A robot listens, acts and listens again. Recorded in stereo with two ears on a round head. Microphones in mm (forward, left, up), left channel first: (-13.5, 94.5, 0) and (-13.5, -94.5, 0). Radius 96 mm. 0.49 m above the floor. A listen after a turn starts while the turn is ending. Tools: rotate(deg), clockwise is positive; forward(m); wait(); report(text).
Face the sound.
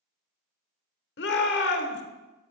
rotate(-55)
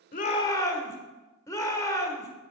rotate(-20)
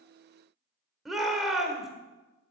report("Found it: a shout, straight ahead.")